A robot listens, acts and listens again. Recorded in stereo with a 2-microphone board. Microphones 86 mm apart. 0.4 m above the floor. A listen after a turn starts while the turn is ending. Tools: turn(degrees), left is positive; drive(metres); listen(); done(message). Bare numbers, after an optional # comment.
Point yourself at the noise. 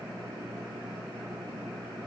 listen()
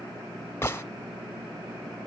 # The gunshot: about 25° left or 155° left.
turn(25)
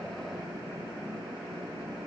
listen()
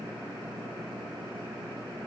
done("I heard a gunshot, but can't make it out now. It was about straight ahead or 130° left.")